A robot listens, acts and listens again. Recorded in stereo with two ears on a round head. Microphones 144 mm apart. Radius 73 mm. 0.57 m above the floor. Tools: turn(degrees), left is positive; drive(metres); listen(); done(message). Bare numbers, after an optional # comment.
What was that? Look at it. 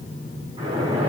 # The splash: about 35° right or 145° right.
turn(-35)
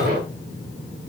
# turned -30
# So it is at 115° right.
turn(-115)
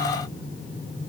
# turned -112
done("I heard a splash from this way, but can't make it out now.")